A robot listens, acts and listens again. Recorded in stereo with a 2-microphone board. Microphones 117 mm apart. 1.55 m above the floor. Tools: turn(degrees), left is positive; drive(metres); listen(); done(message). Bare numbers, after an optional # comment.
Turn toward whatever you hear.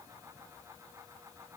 listen()
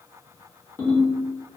# The ringtone: about 15° left or 165° left.
turn(15)
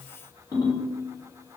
# So it is at 150° left.
turn(150)
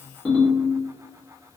done("Facing the ringtone, 1 to 2 m away.")